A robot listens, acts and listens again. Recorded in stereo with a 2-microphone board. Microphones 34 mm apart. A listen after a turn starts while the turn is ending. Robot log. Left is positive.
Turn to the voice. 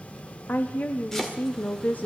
note: The woman speaking: about 55° left or 125° left.
cmd yaw +55
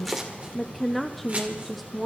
end: Found it: a woman speaking, straight ahead, under 1 m away.